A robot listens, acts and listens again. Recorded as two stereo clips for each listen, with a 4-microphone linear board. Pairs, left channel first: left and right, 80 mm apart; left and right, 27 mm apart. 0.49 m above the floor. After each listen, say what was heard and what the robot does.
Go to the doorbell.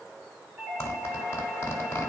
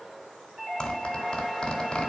Turn 30° right.
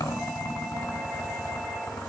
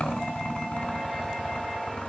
Keep listening.
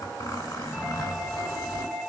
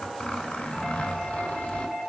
So it is at 15° left. Turn 15° left.
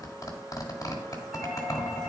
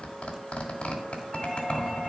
Keep listening.
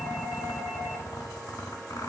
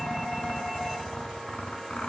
Keep listening.
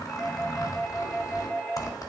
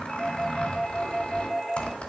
Drive 1.0 m forward.
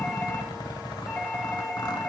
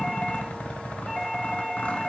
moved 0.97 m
Keep listening.
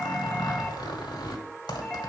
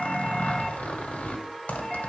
Keep listening.
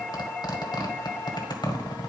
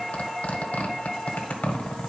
Drive 1.0 m forward.
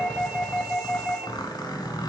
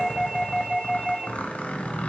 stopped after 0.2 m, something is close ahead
I am next to the doorbell.